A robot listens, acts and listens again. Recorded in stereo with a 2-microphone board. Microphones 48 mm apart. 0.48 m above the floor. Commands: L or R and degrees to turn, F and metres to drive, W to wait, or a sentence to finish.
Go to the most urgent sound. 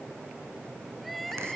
L30
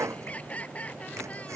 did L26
L155
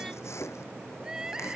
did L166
R10
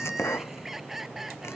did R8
F1.0
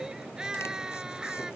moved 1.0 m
R10
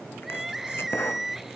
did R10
F1.0
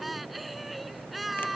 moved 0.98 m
F1.0
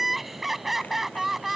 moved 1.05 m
F1.0
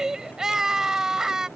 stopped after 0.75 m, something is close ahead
R10
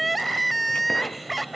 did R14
I am next to the crying.